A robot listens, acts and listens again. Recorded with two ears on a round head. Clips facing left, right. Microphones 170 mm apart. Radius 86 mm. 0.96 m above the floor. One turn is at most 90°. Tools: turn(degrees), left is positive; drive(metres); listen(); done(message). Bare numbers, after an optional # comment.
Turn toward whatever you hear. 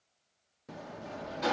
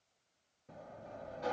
turn(90)
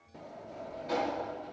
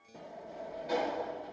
done("Facing the sliding door.")